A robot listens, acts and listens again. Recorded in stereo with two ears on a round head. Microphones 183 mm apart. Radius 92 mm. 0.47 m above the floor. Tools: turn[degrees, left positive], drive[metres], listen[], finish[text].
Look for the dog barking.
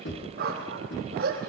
Thought: The dog barking: about 45° right or 135° right.
Action: turn[-45]
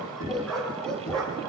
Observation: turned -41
Action: finish[Found it: a dog barking, straight ahead.]